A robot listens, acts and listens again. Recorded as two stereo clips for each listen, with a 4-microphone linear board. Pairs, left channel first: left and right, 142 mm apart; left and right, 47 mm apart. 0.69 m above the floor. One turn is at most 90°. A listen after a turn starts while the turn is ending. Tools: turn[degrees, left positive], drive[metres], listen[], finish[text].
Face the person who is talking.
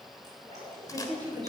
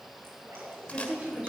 Thought: The woman speaking: about 30° right or 150° right.
Action: turn[-30]
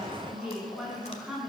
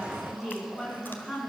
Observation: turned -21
Action: finish[Facing the woman speaking.]